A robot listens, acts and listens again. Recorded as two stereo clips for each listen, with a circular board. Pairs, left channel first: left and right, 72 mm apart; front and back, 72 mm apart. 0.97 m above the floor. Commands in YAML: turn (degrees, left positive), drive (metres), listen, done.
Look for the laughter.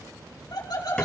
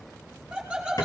turn: 100
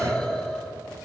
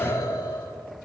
turn: 10
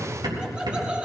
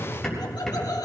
turn: -15
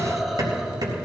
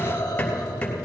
done: "Facing the laughter, 2 to 4 m away."